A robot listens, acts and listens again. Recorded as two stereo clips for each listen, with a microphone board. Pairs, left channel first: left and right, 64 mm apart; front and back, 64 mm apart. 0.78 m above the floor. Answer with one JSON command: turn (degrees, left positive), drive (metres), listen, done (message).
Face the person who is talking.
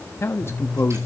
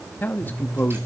{"turn": 55}
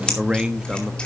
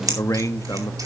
{"turn": -15}
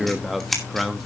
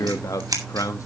{"done": "Found it: a man speaking, straight ahead, under 1 m away."}